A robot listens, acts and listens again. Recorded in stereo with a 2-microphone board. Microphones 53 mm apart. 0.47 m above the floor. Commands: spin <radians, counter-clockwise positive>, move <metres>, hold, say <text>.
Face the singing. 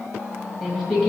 spin -0.52
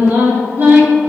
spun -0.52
spin -2.53
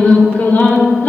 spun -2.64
spin 0.61
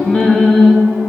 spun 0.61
spin 0.35
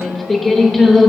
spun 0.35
say Found it: singing, straight ahead.